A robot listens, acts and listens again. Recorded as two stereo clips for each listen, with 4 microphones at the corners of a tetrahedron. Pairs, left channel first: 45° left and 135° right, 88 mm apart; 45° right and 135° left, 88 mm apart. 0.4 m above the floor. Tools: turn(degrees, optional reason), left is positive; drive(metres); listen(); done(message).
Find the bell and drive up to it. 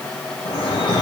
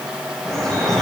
listen()
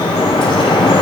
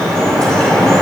listen()
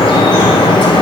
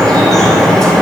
done("I can't make out a bell, only dripping.")